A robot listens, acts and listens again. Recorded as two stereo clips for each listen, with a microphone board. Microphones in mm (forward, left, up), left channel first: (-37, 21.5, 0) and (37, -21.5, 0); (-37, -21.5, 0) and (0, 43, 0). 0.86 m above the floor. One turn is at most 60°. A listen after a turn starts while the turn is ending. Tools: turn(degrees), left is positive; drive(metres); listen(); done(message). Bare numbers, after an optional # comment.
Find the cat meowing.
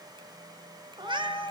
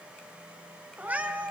# The cat meowing: 10° right.
turn(-10)
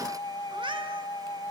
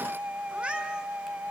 # The cat meowing is now 15° right.
turn(-15)
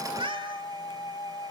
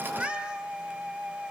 # The cat meowing is now 15° right.
turn(-15)
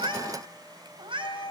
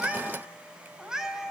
# The cat meowing is now 20° right.
turn(-20)
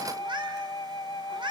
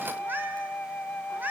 done("Facing the cat meowing.")